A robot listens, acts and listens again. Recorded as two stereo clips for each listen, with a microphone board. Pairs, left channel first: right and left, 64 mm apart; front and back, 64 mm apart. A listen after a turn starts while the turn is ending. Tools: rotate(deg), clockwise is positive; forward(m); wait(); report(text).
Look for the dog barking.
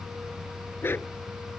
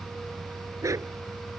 rotate(145)
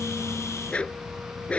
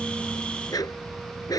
rotate(20)
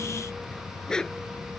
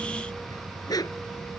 rotate(10)
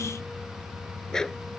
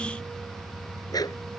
rotate(10)
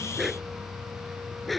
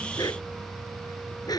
report("Found it: a dog barking, straight ahead.")